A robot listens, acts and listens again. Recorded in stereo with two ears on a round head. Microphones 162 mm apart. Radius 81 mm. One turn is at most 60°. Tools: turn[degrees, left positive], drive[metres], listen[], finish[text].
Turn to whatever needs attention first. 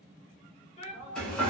Thought: The shout: about 35° left or 145° left.
Action: turn[35]
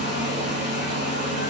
Action: listen[]
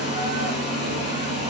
Action: listen[]
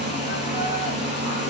Action: finish[I heard a shout, but can't make it out now. It was about straight ahead or 110° left.]